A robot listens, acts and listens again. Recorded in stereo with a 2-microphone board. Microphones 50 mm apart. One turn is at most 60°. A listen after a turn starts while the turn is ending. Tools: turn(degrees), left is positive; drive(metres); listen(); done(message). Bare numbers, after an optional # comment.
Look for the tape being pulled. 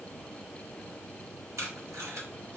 turn(-60)
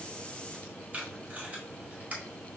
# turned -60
# So it is at 30° right.
turn(-30)
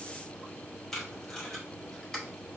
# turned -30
# The tape being pulled is now 10° left.
turn(10)
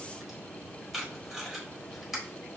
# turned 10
done("Facing the tape being pulled.")